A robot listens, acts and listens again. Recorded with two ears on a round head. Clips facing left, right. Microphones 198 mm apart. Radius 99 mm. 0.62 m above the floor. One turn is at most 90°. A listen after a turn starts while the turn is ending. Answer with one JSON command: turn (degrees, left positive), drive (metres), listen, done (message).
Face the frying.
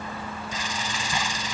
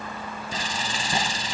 {"turn": -30}
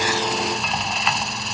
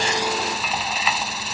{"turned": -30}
{"done": "Found it: frying, straight ahead."}